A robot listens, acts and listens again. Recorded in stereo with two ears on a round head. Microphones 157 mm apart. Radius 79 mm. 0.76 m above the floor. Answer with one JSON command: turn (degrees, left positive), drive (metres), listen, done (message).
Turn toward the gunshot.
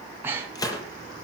{"turn": 20}
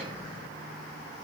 {"listen": true}
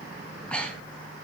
{"done": "I heard a gunshot, but can't make it out now. It was about straight ahead or 140° left."}